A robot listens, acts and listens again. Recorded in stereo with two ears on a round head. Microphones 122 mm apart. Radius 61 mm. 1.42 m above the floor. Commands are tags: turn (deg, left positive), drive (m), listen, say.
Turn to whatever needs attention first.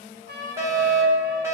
<turn deg="-20"/>
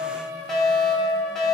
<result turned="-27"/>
<say>Found it: a fire alarm, straight ahead, 2 to 4 m away.</say>